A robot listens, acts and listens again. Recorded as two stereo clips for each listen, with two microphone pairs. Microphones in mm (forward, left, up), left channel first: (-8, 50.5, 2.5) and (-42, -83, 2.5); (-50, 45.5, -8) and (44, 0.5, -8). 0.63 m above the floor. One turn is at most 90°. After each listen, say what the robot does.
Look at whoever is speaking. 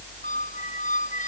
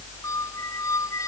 Keep listening.
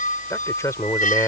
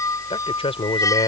Turn 90° left.
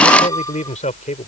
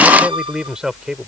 Turn 55° left.
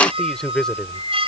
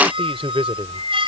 Turn 10° right.
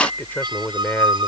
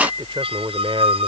Facing the man speaking.